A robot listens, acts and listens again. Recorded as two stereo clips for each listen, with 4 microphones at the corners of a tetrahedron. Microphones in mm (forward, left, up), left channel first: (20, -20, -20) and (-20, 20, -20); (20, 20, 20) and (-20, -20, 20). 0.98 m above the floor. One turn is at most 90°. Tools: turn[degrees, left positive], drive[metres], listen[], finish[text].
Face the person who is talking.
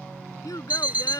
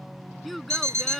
Thought: The child speaking: 45° right.
Action: turn[-45]
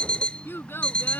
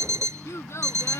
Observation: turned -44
Action: finish[Facing the child speaking.]